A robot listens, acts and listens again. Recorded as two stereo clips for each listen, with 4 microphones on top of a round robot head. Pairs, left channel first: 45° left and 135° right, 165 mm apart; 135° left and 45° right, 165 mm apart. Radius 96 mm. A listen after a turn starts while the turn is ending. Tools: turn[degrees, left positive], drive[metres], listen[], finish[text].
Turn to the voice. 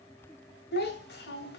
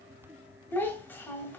Thought: The child speaking: 60° left.
Action: turn[60]
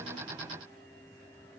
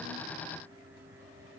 Action: listen[]
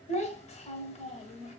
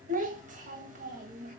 Action: finish[Facing the child speaking, 1 to 2 m away.]